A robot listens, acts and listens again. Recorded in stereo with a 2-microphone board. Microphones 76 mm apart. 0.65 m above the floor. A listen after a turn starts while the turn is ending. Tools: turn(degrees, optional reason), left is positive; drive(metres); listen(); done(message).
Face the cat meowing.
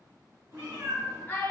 turn(degrees=-35, reason="The cat meowing: about 35° right or 145° right.")
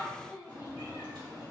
turn(degrees=-110, reason="So it is at 110° right.")
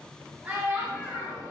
turn(degrees=25, reason="The cat meowing is now 25° left.")
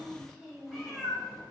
done("Facing the cat meowing, 1 to 2 m away.")